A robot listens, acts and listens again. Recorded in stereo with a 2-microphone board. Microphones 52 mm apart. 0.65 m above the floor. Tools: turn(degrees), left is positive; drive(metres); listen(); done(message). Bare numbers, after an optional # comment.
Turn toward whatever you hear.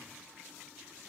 listen()
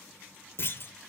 # The clunk: about 50° left or 130° left.
turn(50)
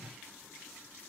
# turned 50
listen()
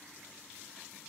done("I heard a clunk, but can't make it out now. It was about straight ahead or 80° left.")